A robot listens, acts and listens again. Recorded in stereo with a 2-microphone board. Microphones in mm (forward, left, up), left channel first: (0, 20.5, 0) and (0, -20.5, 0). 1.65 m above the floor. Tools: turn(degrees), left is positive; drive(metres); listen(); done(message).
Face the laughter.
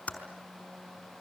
listen()
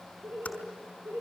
turn(degrees=-60)
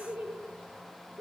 turn(degrees=-50)
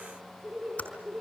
turn(degrees=-10)
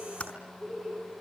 done("Found it: laughter, straight ahead, over 4 m away.")